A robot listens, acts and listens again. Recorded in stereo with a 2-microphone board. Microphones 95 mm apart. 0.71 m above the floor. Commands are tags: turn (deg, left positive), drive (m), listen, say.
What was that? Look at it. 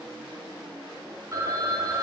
<turn deg="-35"/>
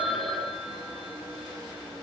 <say>Facing the phone ringing, 2 to 4 m away.</say>